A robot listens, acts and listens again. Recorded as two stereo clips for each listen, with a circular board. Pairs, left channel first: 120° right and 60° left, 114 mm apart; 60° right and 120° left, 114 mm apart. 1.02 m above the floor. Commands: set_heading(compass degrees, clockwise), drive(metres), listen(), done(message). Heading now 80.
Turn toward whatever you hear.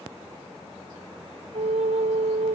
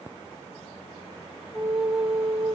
set_heading(45)
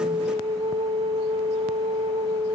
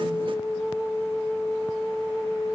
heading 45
done("Facing the flute, under 1 m away.")